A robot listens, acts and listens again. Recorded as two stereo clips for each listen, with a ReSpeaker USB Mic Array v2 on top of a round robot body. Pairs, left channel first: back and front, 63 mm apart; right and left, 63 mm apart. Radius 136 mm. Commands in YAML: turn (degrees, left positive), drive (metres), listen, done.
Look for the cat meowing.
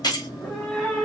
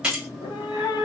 turn: -90
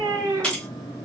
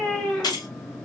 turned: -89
done: "Found it: a cat meowing, straight ahead, under 1 m away."